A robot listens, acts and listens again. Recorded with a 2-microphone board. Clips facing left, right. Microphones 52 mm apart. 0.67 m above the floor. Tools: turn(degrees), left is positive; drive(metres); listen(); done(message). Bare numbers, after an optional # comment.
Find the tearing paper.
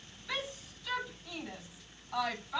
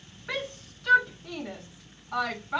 listen()
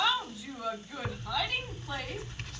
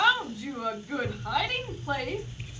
# The tearing paper: about 70° left or 110° left.
turn(70)
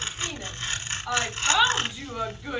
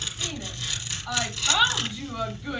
# So it is at 35° left.
turn(35)
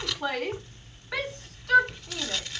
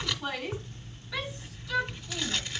done("Found it: tearing paper, straight ahead, 1 to 2 m away.")